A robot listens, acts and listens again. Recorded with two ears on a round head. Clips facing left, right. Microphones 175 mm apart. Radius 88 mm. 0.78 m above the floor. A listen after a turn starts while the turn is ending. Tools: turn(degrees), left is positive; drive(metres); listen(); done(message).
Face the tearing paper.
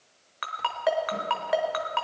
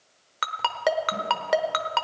listen()
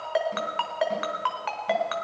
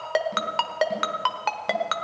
listen()
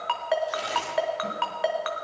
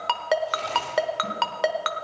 turn(degrees=30)
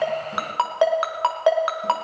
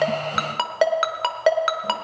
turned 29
listen()
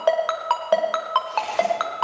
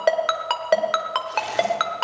listen()
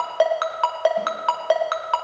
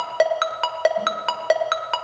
done("I heard tearing paper, but can't make it out now. It was about 20° right or 140° left.")